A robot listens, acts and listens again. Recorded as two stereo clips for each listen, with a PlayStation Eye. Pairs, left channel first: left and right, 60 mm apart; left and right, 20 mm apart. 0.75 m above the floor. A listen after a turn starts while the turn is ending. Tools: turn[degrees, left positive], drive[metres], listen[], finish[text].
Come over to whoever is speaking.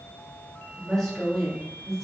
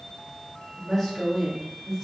Action: turn[30]
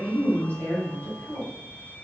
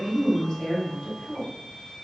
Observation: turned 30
Thought: So it is at 145° left.
Action: turn[145]
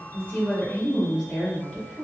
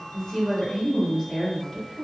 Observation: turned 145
Thought: The woman speaking is now 15° left.
Action: turn[15]
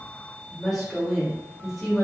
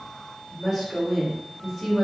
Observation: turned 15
Action: drive[1.0]
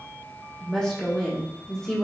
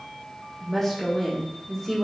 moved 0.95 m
Thought: The woman speaking is now 10° left.
Action: turn[10]
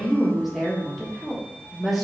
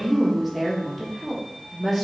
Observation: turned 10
Action: drive[1.0]
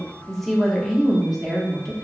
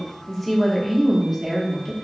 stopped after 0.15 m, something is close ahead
Action: finish[I am next to the woman speaking.]